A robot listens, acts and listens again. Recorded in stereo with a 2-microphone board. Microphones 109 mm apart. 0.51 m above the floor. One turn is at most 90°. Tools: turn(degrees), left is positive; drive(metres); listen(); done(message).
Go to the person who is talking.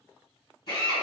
listen()
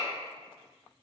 listen()
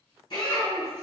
turn(degrees=-25)
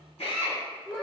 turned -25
drive(metres=1.0)
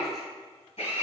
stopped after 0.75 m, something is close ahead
listen()
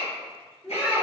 done("I am next to the child speaking.")